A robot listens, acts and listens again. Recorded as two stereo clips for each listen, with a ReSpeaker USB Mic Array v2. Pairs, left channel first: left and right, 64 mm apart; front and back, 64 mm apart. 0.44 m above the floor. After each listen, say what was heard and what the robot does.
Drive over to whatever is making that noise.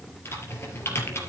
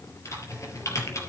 The typing on a keyboard: 40° left. Turn 40° left.
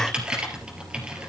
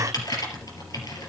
The typing on a keyboard is now 15° right. Turn 15° right.
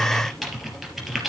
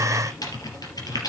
Drive 1.0 m forward.
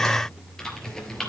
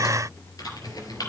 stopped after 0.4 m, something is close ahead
Something is in my way. I am facing the typing on a keyboard but have not reached it.